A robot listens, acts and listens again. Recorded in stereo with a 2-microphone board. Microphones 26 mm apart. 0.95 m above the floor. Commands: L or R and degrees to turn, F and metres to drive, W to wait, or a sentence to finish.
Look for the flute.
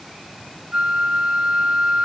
R55
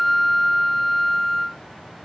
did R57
Facing the flute.